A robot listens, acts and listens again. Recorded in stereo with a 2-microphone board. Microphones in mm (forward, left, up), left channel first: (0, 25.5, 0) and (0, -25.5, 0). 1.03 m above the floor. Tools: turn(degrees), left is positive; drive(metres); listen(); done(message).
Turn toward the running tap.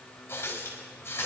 turn(degrees=55)
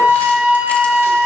listen()
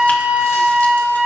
listen()
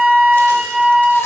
done("I heard a running tap, but can't make it out now. It was about straight ahead or 70° left.")